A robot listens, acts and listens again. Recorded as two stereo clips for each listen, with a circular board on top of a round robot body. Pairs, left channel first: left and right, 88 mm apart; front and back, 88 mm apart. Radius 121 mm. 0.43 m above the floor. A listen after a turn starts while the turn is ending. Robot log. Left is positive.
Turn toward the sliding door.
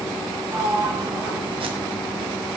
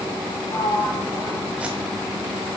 note: The sliding door: 40° right.
cmd yaw -40
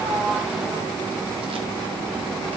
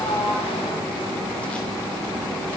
cmd idle
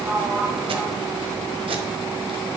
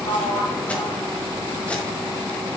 note: The sliding door is now 15° right.
cmd yaw -15
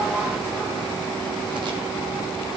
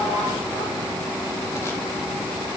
cmd idle
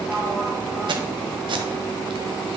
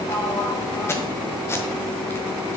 cmd idle
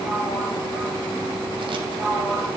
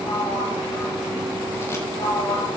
end: Facing the sliding door.